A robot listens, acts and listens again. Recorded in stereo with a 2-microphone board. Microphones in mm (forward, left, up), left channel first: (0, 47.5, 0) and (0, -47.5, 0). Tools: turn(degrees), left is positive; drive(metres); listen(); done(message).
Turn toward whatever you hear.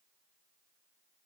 listen()
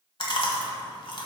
turn(degrees=65)
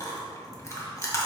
turn(degrees=35)
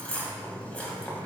turn(degrees=15)
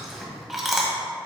done("Facing the chewing, 1 to 2 m away.")